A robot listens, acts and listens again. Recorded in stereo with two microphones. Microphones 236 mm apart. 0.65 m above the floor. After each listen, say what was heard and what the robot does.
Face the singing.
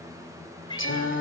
The singing: about 55° left or 125° left. Turn 55° left.
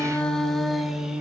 Facing the singing, 2 to 4 m away.